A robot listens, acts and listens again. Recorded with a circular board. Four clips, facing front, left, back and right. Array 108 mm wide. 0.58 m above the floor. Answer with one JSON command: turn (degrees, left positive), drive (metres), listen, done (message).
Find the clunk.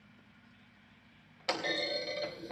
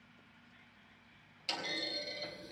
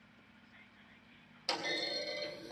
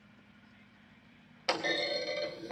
{"turn": -65}
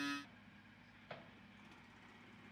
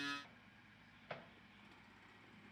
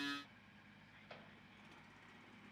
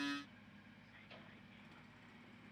{"done": "I heard a clunk from this way, but can't make it out now."}